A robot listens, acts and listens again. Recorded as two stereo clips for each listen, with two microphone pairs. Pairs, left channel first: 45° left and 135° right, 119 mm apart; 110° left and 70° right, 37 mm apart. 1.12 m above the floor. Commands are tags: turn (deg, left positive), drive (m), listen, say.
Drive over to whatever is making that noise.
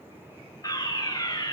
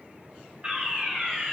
<turn deg="-10"/>
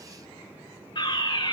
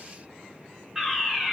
<drive m="1.0"/>
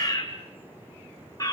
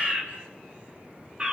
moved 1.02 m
<turn deg="-10"/>
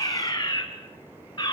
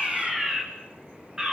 <drive m="1.0"/>
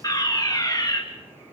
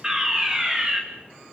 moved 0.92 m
<drive m="1.0"/>
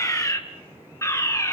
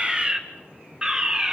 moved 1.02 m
<turn deg="-10"/>
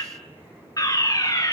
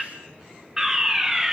<drive m="1.0"/>
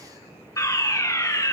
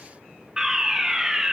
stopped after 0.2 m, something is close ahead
<say>Arrived at the fire alarm, straight ahead.</say>